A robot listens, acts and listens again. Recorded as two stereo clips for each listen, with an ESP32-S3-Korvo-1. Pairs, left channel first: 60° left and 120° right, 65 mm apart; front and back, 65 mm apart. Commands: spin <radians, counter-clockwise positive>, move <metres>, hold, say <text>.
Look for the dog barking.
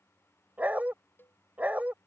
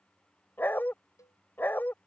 spin -0.96
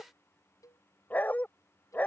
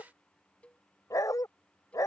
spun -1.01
say Facing the dog barking.